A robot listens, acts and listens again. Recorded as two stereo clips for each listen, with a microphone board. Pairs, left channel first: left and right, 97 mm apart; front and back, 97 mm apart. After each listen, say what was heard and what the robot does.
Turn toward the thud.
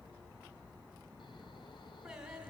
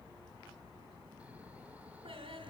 Keep listening.
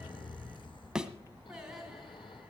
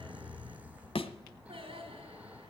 The thud: 10° right. Turn 10° right.
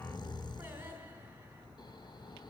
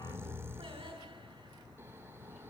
Facing where the thud came from. I can't hear it now.